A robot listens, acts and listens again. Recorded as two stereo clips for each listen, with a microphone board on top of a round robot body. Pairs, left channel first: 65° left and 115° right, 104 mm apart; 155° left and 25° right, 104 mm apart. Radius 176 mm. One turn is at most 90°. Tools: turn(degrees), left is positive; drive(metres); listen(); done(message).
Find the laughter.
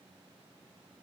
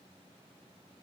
listen()
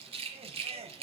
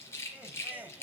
turn(degrees=-90)
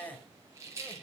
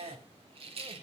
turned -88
done("Facing the laughter, 2 to 4 m away.")